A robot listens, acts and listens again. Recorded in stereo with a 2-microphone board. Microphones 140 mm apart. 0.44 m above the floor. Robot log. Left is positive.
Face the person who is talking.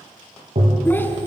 cmd yaw +30
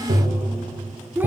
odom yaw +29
note: So it is at 15° right.
cmd yaw -15
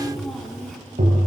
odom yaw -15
end: Found it: a child speaking, straight ahead, 2 to 4 m away.